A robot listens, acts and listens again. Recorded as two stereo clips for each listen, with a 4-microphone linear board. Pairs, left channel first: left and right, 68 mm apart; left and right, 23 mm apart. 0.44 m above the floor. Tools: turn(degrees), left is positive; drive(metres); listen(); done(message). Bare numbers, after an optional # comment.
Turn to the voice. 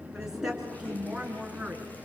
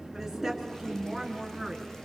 turn(-30)
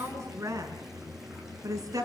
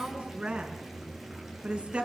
# So it is at 130° right.
turn(-130)
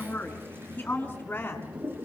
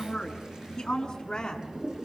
# The woman speaking is now 25° left.
turn(25)
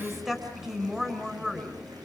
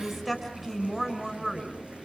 done("Facing the woman speaking, over 4 m away.")